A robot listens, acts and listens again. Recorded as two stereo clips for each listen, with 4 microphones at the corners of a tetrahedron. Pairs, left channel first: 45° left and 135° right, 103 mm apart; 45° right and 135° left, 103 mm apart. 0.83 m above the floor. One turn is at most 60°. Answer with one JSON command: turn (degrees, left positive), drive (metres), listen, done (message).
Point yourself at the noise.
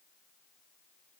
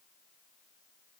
{"listen": true}
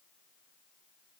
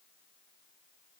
{"listen": true}
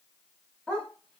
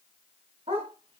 {"turn": 60}
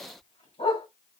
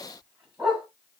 {"turn": 55}
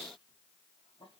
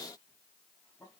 {"listen": true}
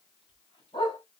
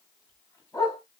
{"turn": 15}
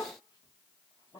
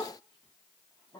{"done": "Facing the dog barking."}